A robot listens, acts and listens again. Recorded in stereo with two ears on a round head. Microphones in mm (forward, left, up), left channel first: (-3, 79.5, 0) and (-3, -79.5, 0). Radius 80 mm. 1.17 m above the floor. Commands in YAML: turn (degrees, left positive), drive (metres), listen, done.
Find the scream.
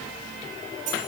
listen: true
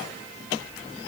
listen: true
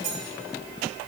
done: "I can't make out a scream."